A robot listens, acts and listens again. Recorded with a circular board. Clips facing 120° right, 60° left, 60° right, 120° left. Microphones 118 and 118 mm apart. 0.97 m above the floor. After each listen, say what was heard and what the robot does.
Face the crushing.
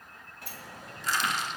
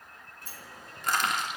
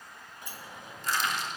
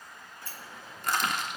The crushing: 95° left. Turn 95° left.
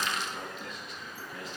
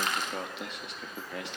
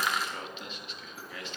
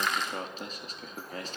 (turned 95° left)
The crushing is now 25° left. Turn 25° left.
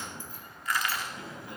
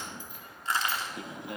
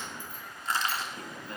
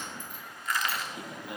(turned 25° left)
Found it: crushing, straight ahead, 2 to 4 m away.